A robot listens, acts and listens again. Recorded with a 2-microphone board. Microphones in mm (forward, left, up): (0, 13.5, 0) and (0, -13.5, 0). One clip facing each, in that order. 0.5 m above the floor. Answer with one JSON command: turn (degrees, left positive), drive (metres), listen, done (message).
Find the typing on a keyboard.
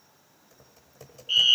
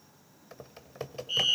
{"turn": -50}
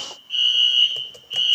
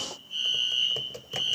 {"turn": -10}
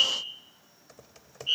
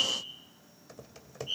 {"done": "Facing the typing on a keyboard."}